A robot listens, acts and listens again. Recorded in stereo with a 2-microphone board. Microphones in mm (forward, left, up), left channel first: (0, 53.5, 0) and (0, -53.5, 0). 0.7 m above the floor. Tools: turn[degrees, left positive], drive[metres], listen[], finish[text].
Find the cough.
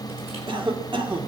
Thought: The cough: about 55° right or 125° right.
Action: turn[-55]
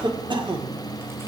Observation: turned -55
Thought: So it is at 60° right.
Action: turn[-60]
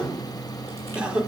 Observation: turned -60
Thought: The cough is now 10° right.
Action: turn[-10]
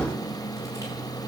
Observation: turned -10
Action: listen[]
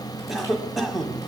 Action: finish[Found it: a cough, straight ahead, 1 to 2 m away.]